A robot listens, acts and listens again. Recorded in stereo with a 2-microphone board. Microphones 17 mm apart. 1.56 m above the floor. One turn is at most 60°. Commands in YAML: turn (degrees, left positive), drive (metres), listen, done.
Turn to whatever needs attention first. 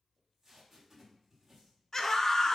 turn: 30
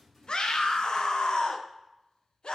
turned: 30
turn: 60
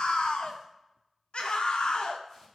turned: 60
turn: 60
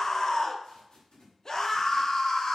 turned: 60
turn: 35
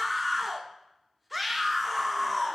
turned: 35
done: "Found it: a scream, straight ahead."